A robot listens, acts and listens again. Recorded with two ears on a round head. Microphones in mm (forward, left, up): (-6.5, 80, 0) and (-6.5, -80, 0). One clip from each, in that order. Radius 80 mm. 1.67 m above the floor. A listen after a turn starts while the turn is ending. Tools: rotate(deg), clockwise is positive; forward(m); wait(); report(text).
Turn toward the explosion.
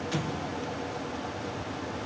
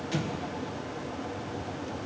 rotate(-30)
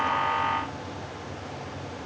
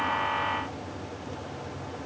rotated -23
wait()
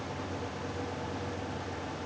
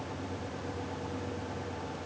report("I heard an explosion, but can't make it out now. It was about 15° right or 145° left.")